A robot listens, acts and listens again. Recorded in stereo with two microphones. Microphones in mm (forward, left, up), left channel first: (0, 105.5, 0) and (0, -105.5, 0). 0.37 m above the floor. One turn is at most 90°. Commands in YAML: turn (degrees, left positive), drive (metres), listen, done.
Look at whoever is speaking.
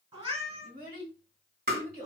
turn: -45
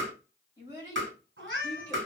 turn: -20
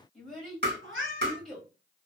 done: "Found it: a child speaking, straight ahead, 1 to 2 m away."